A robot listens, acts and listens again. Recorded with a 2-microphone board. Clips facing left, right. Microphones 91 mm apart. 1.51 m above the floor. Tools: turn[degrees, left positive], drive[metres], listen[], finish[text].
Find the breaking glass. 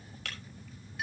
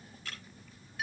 Action: turn[90]
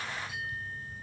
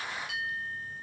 Action: finish[Facing where the breaking glass came from. I can't hear it now.]